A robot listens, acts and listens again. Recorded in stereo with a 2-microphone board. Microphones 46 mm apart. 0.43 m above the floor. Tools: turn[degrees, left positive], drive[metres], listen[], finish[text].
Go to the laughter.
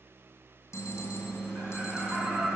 Thought: The laughter: about 45° right or 135° right.
Action: turn[-45]
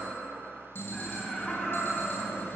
Action: drive[1.0]
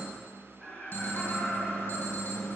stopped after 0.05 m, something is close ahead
Action: finish[Something is in my way. I am facing the laughter but have not reached it.]